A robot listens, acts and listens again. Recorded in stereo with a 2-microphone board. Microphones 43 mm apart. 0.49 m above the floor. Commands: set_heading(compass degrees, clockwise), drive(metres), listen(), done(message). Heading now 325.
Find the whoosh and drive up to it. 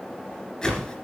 set_heading(295)
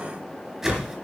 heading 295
set_heading(310)
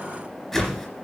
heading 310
drive(1.0)
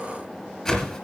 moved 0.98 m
set_heading(300)
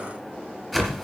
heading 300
drive(1.0)
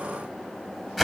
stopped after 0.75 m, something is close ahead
done("Arrived at the whoosh, straight ahead.")